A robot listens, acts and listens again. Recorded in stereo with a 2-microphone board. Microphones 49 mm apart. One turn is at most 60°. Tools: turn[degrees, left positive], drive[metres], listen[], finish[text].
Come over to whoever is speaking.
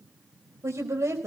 Thought: The woman speaking: about 75° right or 105° right.
Action: turn[-60]
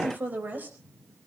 Thought: So it is at 40° right.
Action: turn[-40]
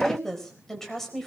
Thought: The woman speaking is now 10° left.
Action: turn[10]
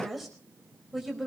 Action: drive[1.0]
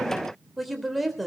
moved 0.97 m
Action: drive[1.0]
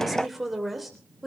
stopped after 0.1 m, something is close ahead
Action: finish[Blocked. The woman speaking is further on, straight ahead.]